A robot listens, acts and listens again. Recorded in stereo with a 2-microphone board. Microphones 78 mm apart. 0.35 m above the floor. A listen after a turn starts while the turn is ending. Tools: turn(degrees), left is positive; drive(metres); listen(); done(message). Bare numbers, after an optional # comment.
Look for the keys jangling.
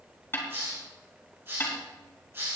listen()
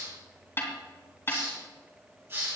listen()
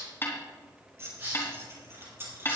# The keys jangling: about 30° right or 150° right.
turn(-30)
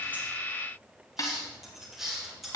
done("Found it: keys jangling, straight ahead, over 4 m away.")